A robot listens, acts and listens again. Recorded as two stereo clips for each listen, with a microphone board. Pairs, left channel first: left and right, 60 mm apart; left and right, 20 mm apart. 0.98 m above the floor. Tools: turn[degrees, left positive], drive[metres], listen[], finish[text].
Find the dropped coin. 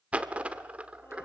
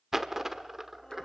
Thought: The dropped coin: about 20° right or 160° right.
Action: turn[-20]
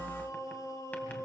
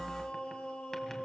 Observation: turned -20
Action: listen[]
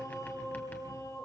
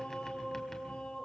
Action: finish[I heard a dropped coin, but can't make it out now. It was about straight ahead or 140° right.]